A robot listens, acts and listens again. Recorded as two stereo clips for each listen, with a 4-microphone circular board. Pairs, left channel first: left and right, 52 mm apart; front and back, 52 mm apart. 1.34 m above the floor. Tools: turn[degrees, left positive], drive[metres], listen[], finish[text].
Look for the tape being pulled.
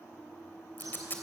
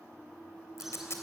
Thought: The tape being pulled: 35° left.
Action: turn[35]
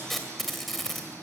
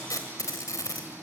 Action: finish[Facing the tape being pulled, 2 to 4 m away.]